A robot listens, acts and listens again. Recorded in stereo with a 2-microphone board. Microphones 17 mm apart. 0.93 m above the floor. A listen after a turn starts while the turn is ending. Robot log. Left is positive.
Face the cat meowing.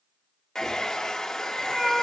note: The cat meowing: about 25° right or 155° right.
cmd yaw -25
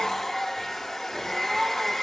cmd idle
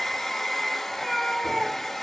note: So it is at 15° left.
cmd yaw +15
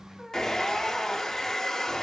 end: Found it: a cat meowing, straight ahead, 2 to 4 m away.